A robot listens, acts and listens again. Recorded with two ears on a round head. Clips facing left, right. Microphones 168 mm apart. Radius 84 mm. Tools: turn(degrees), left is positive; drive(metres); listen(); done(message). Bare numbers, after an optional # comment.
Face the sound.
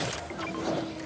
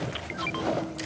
listen()
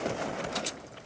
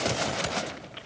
listen()
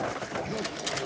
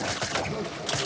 turn(30)
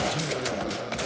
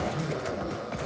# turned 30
# So it is at 145° left.
turn(145)
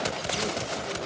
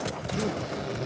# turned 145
# The zipper is now 25° right.
turn(-25)
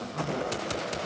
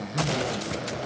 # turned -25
# The zipper is now 25° right.
turn(-25)
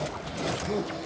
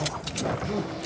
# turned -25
done("Found it: a zipper, straight ahead.")